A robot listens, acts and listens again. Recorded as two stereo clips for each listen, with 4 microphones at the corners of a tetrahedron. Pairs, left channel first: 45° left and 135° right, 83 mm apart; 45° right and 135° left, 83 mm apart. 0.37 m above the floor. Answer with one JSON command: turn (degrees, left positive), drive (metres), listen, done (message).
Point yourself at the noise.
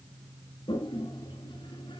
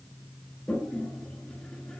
{"turn": 35}
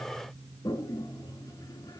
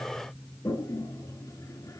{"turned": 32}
{"done": "Facing the toilet flushing."}